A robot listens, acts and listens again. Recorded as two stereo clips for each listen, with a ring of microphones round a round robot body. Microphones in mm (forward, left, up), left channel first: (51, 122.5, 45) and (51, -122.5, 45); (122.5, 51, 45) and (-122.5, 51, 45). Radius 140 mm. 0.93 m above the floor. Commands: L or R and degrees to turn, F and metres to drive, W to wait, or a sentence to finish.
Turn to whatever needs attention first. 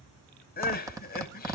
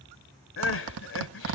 L35
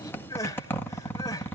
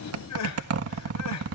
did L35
L15
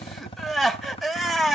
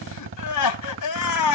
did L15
Facing the crying, 1 to 2 m away.